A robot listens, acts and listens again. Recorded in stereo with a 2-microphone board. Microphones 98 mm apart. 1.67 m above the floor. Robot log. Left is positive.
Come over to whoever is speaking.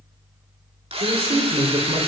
note: The man speaking: about 75° right or 105° right.
cmd yaw -75
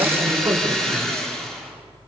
note: So it is at 30° right.
cmd yaw -30
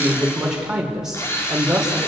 cmd fwd 1.0
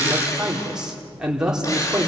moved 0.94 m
cmd fwd 1.0
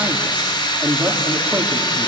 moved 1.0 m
note: The man speaking is now 10° right.
cmd yaw -10
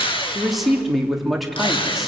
cmd fwd 1.0
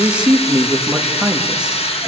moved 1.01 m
note: The man speaking is now 10° right.
cmd yaw -10
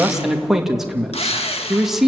cmd fwd 1.0
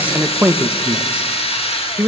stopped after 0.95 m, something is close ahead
note: The man speaking is now 15° right.
cmd yaw -15
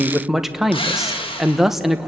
end: Arrived at the man speaking, straight ahead.